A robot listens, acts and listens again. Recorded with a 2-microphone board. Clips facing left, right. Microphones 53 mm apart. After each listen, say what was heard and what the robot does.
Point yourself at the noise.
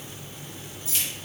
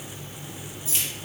The keys jangling: about 20° right or 160° right. Turn 20° right.
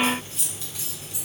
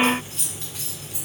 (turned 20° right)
So it is at 135° right. Turn 135° right.
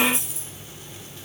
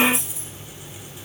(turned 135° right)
The keys jangling is now 15° right. Turn 15° right.
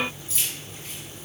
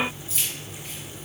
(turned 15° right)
The keys jangling is now 10° right. Turn 10° right.
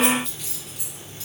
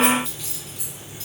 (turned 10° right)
Facing the keys jangling.